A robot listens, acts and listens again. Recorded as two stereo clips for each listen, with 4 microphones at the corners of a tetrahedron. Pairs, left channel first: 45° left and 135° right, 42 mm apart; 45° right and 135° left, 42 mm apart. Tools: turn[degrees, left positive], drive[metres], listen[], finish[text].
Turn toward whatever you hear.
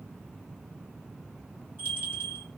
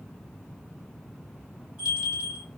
Thought: The bell: 165° right.
Action: turn[-165]
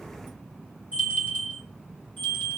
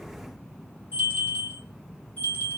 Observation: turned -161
Action: finish[Found it: a bell, straight ahead.]